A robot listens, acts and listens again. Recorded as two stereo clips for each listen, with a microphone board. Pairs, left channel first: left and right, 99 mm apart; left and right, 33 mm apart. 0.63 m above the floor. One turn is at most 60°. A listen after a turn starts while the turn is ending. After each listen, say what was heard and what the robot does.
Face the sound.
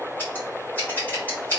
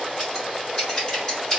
The scissors: about 20° left or 160° left. Turn 20° left.
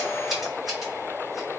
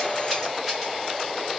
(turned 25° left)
Keep listening.
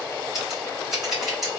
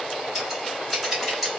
Facing the scissors.